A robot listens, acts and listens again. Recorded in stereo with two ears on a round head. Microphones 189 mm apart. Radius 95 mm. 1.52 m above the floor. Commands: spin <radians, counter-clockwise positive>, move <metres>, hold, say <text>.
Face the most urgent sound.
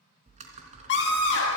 spin 0.96
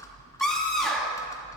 say Facing the scream, 2 to 4 m away.